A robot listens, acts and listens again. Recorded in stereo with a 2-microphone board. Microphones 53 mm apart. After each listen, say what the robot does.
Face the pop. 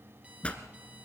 Turn 20° left.
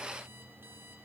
Keep listening.
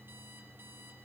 I heard a pop, but can't make it out now. It was about straight ahead or 140° left.